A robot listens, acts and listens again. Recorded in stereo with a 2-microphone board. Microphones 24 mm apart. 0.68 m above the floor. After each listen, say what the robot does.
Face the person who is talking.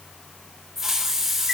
Keep listening.
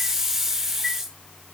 Keep listening.
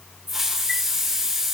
I can't make out anyone speaking to turn to.